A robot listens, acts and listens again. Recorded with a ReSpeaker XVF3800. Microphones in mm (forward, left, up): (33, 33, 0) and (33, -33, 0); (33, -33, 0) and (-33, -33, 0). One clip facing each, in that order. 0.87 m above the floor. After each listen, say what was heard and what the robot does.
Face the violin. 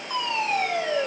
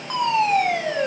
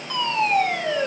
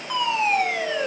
Keep listening.
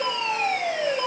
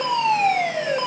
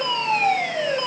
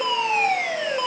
Keep listening.
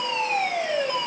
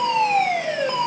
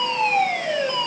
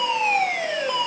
I can't make out a violin to turn to.